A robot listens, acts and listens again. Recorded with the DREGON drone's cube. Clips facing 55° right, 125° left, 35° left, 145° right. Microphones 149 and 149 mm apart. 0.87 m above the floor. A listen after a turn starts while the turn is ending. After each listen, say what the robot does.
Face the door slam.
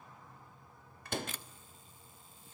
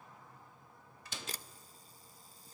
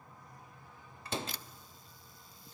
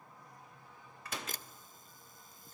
Turn 25° right.
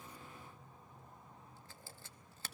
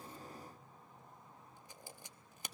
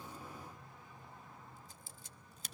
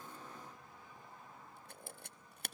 Facing where the door slam came from. I can't hear it now.